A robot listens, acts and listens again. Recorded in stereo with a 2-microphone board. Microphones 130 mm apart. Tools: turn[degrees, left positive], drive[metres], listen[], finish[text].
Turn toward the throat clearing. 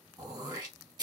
Thought: The throat clearing: about 30° right or 150° right.
Action: turn[-30]
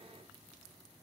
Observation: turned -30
Action: listen[]
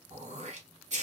Thought: So it is at 120° right.
Action: turn[-120]
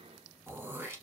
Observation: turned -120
Thought: The throat clearing is now 20° right.
Action: turn[-20]
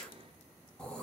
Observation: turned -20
Action: finish[Facing the throat clearing.]